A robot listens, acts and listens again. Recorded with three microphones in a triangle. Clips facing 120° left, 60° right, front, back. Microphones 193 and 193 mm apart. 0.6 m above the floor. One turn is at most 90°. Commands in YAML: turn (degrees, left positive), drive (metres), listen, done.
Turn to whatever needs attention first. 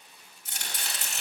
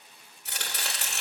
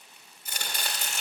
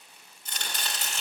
listen: true
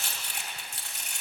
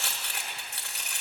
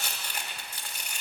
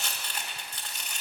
listen: true
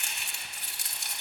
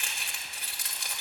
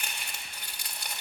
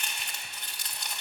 done: "I can't make out anything urgent to turn to."